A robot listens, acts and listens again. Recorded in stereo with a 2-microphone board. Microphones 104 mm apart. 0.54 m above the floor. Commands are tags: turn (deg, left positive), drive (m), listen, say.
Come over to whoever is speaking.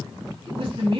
<turn deg="-55"/>
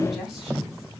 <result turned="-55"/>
<drive m="1.0"/>
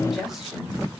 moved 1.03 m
<drive m="1.0"/>
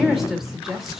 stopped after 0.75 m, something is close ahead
<say>I am next to the woman speaking.</say>